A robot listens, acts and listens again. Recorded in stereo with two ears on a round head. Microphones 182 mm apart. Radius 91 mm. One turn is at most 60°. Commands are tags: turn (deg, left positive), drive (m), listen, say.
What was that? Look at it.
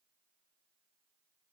<listen/>
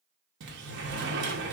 <turn deg="-60"/>
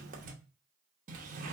<turn deg="-45"/>
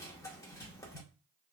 <turn deg="20"/>
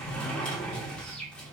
<say>Found it: a sliding door, straight ahead.</say>